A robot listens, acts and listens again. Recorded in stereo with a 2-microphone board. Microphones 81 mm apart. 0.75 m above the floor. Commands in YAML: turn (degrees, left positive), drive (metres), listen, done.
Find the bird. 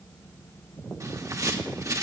turn: -45
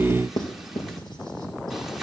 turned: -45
done: "Facing the bird."